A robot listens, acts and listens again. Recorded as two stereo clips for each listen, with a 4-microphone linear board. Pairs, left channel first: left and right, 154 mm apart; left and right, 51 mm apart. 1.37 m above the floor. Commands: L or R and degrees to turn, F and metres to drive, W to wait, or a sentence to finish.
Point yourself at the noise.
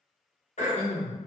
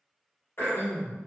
L55
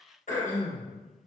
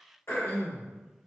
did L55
L65
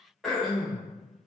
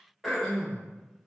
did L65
Facing the throat clearing.